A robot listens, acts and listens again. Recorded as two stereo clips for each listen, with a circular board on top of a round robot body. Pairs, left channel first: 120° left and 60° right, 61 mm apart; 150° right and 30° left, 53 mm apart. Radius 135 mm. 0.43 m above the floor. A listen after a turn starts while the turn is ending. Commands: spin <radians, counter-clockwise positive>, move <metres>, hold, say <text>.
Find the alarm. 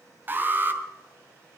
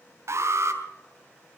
say Found it: an alarm, straight ahead, 2 to 4 m away.